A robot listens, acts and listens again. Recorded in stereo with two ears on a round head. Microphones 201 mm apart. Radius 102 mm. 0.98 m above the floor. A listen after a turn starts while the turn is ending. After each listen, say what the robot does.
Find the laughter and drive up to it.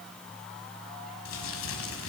Keep listening.
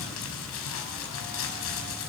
Keep listening.
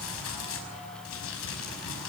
I can't make out laughter, only crumpling.